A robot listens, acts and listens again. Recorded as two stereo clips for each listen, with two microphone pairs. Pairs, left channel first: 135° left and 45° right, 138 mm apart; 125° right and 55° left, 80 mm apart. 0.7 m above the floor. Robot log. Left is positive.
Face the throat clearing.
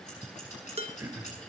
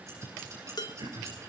note: The throat clearing: 30° left.
cmd yaw +30
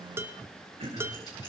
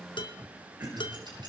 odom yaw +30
end: Facing the throat clearing.